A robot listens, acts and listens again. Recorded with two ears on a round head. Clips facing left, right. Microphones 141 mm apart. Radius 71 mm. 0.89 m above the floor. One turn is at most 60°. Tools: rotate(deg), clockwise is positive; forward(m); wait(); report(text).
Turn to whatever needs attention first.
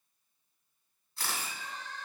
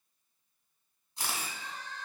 rotate(-40)
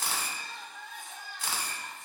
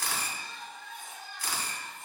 rotate(-60)
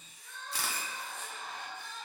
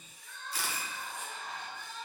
rotate(-35)
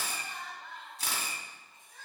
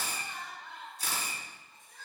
report("Found it: crying, straight ahead, 2 to 4 m away.")